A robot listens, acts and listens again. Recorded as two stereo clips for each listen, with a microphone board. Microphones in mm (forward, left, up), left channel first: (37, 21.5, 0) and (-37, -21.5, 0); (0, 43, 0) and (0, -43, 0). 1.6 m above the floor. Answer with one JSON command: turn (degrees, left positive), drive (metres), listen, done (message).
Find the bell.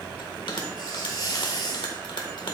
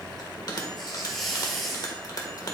{"turn": 50}
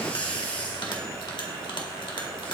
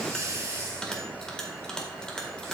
{"turn": 10}
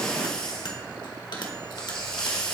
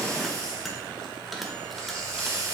{"done": "Facing the bell, 1 to 2 m away."}